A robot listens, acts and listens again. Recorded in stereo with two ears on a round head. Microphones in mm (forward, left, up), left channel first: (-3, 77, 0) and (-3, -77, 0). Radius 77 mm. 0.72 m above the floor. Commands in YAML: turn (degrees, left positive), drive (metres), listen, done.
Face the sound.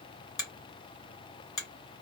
turn: 20
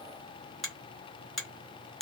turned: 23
done: "Found it: a finger snap, straight ahead, 1 to 2 m away."